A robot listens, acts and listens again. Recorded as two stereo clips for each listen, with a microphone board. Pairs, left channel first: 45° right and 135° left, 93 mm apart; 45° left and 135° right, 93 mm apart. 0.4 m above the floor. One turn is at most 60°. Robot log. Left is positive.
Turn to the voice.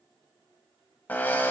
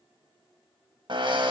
cmd idle
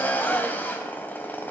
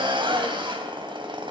cmd idle
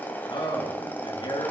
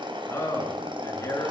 note: The man speaking: 15° right.
cmd yaw -15
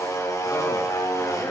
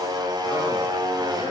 cmd idle
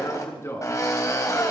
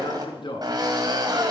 note: The man speaking is now 15° left.
cmd yaw +15
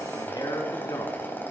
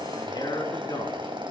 end: Found it: a man speaking, straight ahead.